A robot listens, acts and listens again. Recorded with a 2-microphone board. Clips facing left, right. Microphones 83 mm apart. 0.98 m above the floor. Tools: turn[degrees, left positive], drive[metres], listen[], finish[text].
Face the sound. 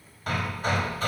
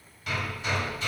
Thought: The hammering: about 45° left or 135° left.
Action: turn[45]
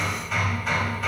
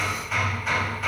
Action: finish[Found it: hammering, straight ahead, 2 to 4 m away.]